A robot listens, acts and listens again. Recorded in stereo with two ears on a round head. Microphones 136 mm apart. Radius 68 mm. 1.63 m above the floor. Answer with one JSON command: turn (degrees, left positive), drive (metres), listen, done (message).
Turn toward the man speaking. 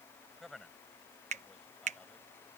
{"turn": 30}
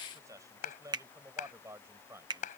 {"turn": -20}
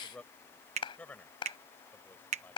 {"turn": 10}
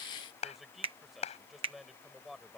{"done": "Facing the man speaking."}